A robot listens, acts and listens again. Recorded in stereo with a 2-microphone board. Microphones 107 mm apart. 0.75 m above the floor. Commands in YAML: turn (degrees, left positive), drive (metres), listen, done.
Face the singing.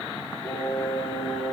turn: 20
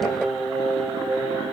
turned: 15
turn: -10
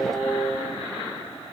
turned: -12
done: "Facing the singing, 2 to 4 m away."